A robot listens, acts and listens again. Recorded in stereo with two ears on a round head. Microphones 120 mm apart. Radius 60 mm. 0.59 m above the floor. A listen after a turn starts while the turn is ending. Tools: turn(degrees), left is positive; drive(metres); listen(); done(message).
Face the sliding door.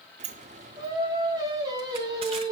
turn(degrees=-55)
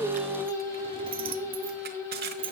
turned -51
turn(degrees=-50)
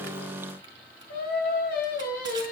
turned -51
listen()
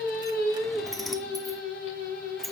done("Facing the sliding door.")